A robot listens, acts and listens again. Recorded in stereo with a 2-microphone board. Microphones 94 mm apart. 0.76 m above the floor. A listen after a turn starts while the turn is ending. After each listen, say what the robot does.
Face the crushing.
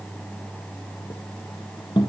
Keep listening.
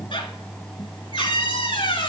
Keep listening.
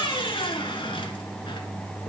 I can't make out crushing to turn to.